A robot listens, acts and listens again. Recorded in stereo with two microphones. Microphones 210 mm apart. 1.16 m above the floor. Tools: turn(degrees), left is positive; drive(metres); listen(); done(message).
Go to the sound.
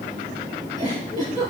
turn(degrees=-35)
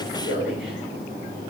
turn(degrees=-105)
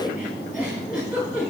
drive(metres=1.0)
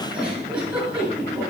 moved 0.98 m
drive(metres=1.0)
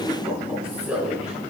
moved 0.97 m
drive(metres=1.0)
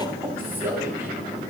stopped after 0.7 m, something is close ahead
turn(degrees=-15)
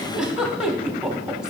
done("Arrived at the giggle, straight ahead.")